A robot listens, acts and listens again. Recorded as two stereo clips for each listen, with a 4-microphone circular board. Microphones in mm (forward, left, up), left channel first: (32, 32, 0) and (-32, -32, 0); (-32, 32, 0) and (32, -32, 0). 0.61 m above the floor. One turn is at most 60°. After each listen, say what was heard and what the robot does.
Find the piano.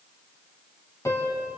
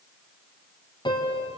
The piano: 100° left. Turn 60° left.
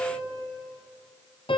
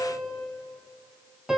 The piano is now 40° left. Turn 40° left.
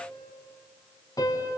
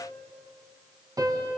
Found it: a piano, straight ahead, 2 to 4 m away.